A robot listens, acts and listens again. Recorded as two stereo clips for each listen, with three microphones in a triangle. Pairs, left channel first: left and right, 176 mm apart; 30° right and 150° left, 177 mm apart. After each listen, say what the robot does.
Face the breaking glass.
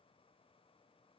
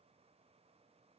Keep listening.
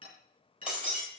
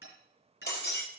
Facing the breaking glass, over 4 m away.